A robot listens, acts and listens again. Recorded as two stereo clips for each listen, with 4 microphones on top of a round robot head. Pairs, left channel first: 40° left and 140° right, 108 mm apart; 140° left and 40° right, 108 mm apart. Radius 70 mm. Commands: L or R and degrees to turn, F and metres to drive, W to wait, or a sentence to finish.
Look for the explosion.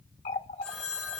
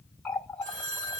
W
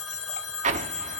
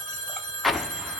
R130
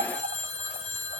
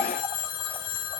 I heard an explosion from this way, but can't make it out now.